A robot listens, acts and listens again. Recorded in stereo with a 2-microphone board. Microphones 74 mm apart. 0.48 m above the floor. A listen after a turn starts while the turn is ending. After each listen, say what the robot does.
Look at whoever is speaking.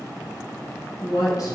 Turn 50° left.
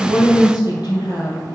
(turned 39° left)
Turn 85° left.
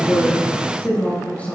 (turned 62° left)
Turn 20° left.
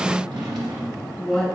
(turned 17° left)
Found it: a woman speaking, straight ahead.